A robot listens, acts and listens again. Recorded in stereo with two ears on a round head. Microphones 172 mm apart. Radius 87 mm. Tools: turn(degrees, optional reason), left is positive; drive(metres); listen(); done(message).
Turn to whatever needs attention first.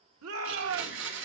turn(degrees=-90)
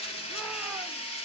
listen()
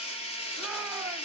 listen()
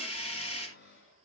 done("Facing where the shout came from. I can't hear it now.")